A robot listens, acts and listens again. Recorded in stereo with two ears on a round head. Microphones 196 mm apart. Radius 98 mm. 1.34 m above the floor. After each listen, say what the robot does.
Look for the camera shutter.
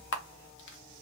Turn 65° left.
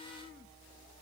Keep listening.
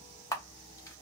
Turn 15° left.
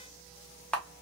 Facing the camera shutter.